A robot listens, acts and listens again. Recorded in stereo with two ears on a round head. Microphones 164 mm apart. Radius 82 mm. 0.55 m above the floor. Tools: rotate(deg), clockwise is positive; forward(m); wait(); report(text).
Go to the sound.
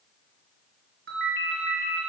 rotate(65)
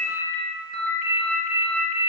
rotate(50)
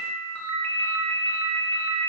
rotate(-10)
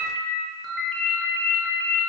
forward(1.0)
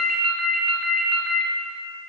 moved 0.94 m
forward(1.0)
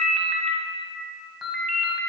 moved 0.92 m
forward(1.0)
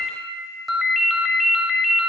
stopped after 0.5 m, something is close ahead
report("I am next to the ringtone.")